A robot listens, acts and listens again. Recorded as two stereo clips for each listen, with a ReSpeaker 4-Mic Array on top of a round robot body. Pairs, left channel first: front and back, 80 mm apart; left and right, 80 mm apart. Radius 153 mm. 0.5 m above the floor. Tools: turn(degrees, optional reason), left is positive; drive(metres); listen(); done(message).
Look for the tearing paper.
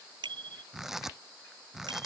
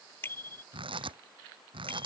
turn(degrees=-95, reason="The tearing paper: 95° right.")
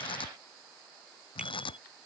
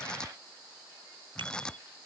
turn(degrees=10, reason="The tearing paper is now 10° left.")
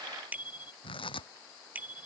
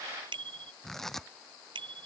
done("Found it: tearing paper, straight ahead.")